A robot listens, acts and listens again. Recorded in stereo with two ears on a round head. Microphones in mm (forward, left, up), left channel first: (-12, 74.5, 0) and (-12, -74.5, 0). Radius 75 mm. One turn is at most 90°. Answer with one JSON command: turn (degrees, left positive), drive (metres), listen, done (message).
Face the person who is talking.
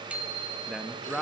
{"turn": 30}
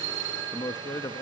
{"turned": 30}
{"turn": 90}
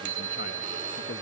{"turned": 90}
{"turn": 65}
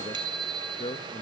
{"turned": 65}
{"turn": 35}
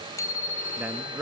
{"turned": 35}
{"turn": -10}
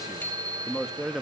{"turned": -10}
{"done": "Found it: a man speaking, straight ahead."}